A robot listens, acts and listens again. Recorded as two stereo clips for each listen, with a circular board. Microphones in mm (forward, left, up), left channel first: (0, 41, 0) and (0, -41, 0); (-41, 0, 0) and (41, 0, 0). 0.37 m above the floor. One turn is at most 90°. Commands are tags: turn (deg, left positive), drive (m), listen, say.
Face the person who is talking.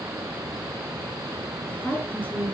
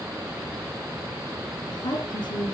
<turn deg="90"/>
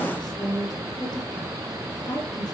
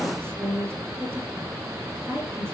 <turn deg="60"/>
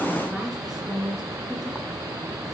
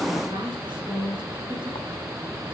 <say>Facing the woman speaking, over 4 m away.</say>